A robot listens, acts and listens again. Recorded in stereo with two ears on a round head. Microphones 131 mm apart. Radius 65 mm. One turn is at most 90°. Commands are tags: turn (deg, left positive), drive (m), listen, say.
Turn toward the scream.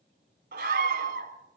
<turn deg="-70"/>
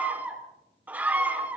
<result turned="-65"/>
<turn deg="-10"/>
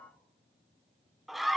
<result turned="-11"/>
<say>Found it: a scream, straight ahead.</say>